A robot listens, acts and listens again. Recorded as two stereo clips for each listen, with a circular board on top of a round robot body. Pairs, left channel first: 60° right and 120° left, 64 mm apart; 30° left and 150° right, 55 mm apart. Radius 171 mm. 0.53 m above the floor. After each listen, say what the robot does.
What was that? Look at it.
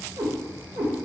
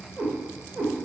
Turn 145° left.
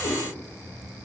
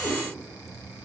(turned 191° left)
Turn 50° right.
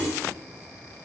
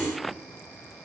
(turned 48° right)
Keep listening.
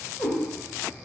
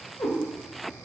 Found it: a cat meowing, straight ahead.